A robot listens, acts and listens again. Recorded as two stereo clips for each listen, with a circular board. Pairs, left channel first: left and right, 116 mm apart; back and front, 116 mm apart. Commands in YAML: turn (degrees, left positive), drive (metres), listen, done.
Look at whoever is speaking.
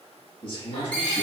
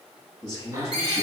turn: 130
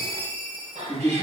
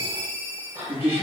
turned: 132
done: "Found it: a man speaking, straight ahead."